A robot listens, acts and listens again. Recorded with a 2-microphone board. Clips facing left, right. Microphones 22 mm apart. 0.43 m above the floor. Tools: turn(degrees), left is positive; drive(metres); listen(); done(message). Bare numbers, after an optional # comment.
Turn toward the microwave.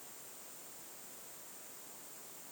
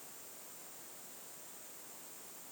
listen()
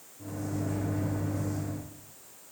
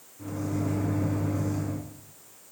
turn(-90)
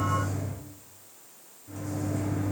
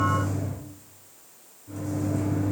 done("Found it: a microwave, straight ahead, 2 to 4 m away.")